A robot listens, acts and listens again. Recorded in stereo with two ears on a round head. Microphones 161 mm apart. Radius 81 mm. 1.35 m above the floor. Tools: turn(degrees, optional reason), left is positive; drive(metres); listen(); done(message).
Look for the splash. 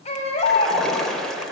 turn(degrees=30)
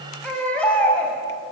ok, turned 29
listen()
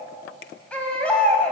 done("I heard a splash, but can't make it out now. It was about 25° right or 150° left.")